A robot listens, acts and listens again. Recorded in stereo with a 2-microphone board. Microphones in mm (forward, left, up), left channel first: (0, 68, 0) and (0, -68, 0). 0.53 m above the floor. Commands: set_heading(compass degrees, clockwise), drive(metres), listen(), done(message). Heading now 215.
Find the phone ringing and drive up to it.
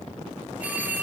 set_heading(245)
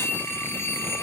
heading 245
set_heading(225)
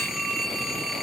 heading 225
drive(1.0)
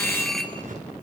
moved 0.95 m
drive(1.0)
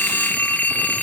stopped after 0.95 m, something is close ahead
set_heading(210)
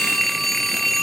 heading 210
done("I am next to the phone ringing.")